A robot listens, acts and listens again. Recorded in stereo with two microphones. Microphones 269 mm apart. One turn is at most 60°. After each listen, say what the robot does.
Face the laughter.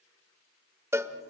Keep listening.
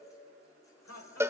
Turn 60° left.
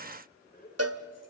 Turn 35° left.
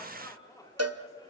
Turn 15° left.
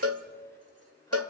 Keep listening.
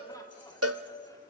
Keep listening.
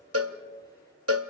Facing where the laughter came from. I can't hear it now.